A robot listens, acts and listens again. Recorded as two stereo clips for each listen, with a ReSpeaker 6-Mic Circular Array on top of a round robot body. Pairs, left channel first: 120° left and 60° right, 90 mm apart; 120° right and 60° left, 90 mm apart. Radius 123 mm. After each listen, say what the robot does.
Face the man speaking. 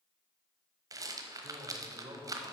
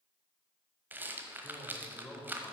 Turn 50° right.
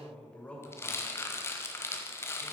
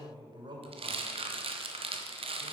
Turn 50° left.
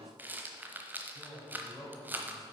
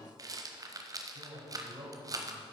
Turn 30° left.
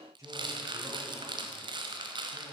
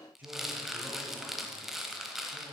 Turn 10° right.
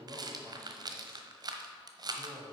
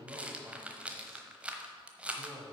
Found it: a man speaking, straight ahead, 2 to 4 m away.